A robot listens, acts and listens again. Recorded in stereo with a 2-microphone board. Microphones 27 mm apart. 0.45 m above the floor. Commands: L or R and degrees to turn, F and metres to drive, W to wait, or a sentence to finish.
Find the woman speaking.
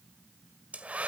W
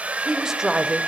R25
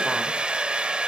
W
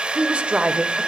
R125
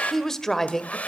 L20
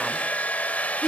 Facing the woman speaking.